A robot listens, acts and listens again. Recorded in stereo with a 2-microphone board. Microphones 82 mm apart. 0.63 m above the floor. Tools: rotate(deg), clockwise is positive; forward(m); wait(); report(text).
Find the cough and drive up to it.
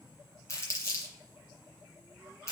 wait()
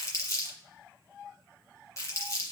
wait()
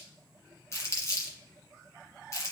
report("I can't make out a cough, only crumpling.")